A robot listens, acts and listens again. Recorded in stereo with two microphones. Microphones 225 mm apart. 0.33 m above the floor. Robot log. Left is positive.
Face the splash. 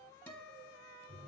cmd idle
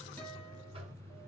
cmd idle
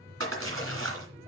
note: The splash: about 75° right or 105° right.
cmd yaw -75
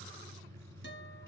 cmd idle
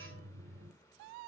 end: I heard a splash, but can't make it out now. It was about straight ahead or 30° right.